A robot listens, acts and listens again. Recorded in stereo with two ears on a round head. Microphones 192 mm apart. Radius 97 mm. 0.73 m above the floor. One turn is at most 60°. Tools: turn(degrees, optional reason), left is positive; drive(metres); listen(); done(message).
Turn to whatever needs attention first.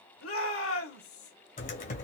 turn(degrees=60, reason="The shout: about 70° left or 110° left.")
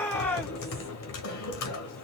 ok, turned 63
turn(degrees=10, reason="So it is at 10° left.")
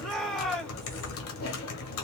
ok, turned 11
done("Facing the shout.")